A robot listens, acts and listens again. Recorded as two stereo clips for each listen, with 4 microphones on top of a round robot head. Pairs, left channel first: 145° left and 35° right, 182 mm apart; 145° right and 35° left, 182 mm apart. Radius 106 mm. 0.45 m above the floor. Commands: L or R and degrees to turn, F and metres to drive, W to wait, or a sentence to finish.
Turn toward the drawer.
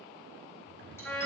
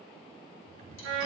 R15
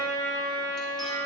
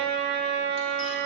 W
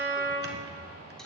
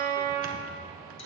Found it: a drawer, straight ahead, 1 to 2 m away.